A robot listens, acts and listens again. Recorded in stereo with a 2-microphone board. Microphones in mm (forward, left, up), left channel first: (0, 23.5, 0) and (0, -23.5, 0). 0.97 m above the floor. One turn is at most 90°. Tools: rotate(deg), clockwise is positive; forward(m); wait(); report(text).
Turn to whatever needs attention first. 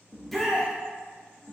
rotate(-30)
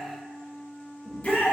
rotate(-90)
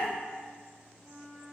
rotate(-55)
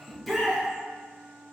report("Facing the shout, under 1 m away.")